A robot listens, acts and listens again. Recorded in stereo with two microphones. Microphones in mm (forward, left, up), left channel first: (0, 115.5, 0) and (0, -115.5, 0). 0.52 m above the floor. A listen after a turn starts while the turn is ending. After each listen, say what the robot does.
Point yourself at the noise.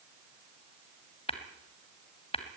Turn 25° left.
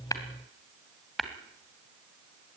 Facing the tapping.